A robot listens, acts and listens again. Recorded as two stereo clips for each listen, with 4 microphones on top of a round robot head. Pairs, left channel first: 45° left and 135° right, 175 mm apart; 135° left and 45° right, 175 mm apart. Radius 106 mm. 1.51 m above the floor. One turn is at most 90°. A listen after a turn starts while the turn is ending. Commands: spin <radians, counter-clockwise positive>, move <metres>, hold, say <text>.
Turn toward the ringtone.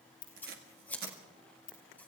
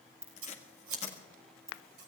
spin 0.52
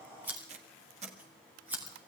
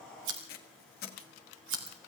hold
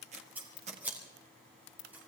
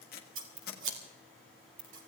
spin 0.26
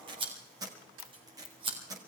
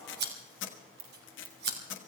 say Found it: a ringtone, straight ahead.